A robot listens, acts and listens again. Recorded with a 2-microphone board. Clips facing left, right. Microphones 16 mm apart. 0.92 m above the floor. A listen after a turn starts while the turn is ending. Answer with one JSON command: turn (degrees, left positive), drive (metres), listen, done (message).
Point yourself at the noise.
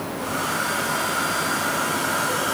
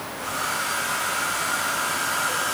{"turn": 30}
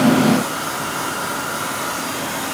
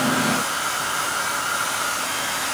{"turn": -30}
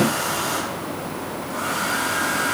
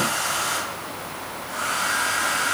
{"turn": -25}
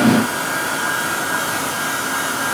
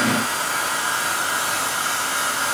{"turn": -10}
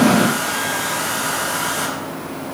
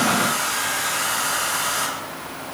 {"done": "Found it: a hair dryer, straight ahead, over 4 m away."}